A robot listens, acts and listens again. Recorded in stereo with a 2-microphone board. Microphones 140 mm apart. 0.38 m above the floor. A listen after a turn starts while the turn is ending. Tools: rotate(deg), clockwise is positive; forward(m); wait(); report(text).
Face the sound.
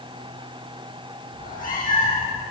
rotate(-70)
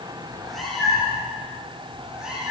report("Facing the cat meowing, over 4 m away.")